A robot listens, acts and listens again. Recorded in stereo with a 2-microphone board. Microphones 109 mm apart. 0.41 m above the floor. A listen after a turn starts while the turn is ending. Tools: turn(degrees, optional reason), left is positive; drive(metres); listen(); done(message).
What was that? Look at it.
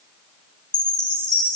turn(degrees=45, reason="The chime: about 45° left or 135° left.")
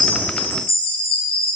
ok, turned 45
turn(degrees=85, reason="So it is at 85° left.")
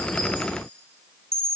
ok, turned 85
turn(degrees=-30, reason="The chime is now 30° right.")
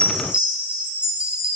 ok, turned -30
turn(degrees=-10, reason="The chime is now 10° right.")
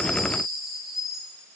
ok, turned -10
done("Found it: a chime, straight ahead.")